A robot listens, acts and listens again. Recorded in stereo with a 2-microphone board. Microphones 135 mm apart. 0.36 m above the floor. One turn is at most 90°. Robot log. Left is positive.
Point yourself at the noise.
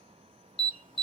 note: The alarm: about 35° left or 145° left.
cmd yaw +35
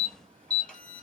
note: So it is at 10° left.
cmd yaw +10
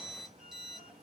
cmd idle
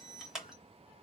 end: Facing the alarm, 1 to 2 m away.